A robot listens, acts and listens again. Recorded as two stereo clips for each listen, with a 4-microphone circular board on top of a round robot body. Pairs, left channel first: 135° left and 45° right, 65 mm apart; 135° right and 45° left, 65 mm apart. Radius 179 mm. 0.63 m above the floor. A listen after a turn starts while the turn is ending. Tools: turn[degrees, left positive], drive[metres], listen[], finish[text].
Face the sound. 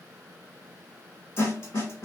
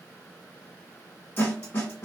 Thought: The snare drum: 175° left.
Action: turn[175]
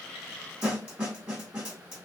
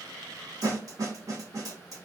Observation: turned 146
Thought: The snare drum is now 25° left.
Action: turn[25]
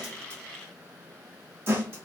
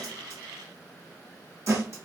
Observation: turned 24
Action: finish[Found it: a snare drum, straight ahead.]